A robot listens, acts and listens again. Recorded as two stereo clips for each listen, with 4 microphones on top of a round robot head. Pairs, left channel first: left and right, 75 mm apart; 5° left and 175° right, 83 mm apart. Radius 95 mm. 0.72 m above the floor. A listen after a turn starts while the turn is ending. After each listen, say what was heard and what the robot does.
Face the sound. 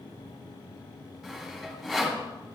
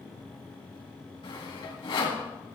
Facing the sawing.